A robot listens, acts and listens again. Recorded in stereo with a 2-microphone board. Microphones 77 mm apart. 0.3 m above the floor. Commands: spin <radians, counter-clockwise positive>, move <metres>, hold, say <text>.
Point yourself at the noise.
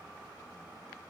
hold
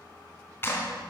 spin 0.52
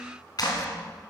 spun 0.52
spin 2.01
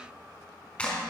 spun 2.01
spin 0.26
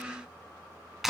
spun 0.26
say Facing the clap.